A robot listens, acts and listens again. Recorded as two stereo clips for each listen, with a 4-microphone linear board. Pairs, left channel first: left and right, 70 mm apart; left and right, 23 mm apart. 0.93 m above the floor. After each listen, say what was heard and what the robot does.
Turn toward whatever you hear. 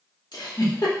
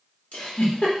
Turn 90° left.
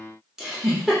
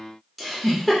Facing the giggle.